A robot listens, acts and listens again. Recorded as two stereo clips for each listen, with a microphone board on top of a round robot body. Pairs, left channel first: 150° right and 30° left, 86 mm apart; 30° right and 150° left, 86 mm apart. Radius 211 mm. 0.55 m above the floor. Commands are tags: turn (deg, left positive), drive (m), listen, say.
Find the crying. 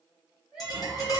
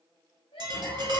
<turn deg="-55"/>
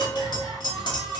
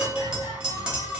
<listen/>
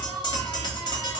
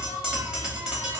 <listen/>
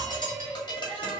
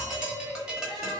<say>Facing the crying.</say>